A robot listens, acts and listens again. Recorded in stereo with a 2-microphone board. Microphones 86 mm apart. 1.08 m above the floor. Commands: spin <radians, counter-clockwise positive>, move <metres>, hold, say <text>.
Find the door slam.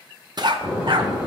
spin -0.52
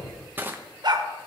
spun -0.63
hold
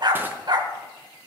say I heard a door slam, but can't make it out now. It was about 25° left or 130° right.